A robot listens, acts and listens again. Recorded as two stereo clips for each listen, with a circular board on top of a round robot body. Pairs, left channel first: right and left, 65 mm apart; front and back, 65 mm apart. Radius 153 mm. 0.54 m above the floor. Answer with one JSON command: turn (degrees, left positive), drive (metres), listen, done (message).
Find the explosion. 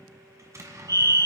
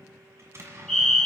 {"turn": 135}
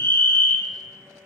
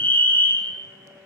{"done": "Facing where the explosion came from. I can't hear it now."}